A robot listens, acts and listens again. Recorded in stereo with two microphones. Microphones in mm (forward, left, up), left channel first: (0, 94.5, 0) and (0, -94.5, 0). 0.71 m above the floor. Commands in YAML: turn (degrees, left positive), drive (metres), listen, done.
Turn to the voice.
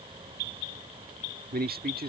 turn: -55
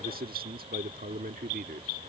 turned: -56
turn: -60
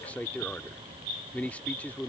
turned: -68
turn: 10
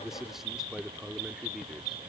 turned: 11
done: "Found it: a man speaking, straight ahead."